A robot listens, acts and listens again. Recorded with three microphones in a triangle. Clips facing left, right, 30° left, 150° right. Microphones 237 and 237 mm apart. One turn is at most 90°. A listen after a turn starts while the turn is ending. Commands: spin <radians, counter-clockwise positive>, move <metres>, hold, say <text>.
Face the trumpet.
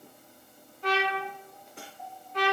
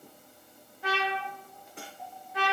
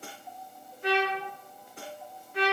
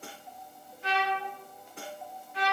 spin -0.17
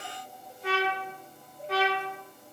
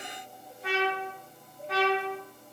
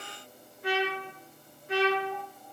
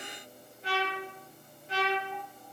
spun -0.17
say Found it: a trumpet, straight ahead.